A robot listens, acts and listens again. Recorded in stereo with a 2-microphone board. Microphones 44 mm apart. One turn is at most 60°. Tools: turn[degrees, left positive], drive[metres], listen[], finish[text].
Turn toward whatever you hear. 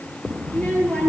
Thought: The child speaking: about 25° left or 155° left.
Action: turn[25]
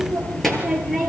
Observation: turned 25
Action: finish[Found it: a child speaking, straight ahead, over 4 m away.]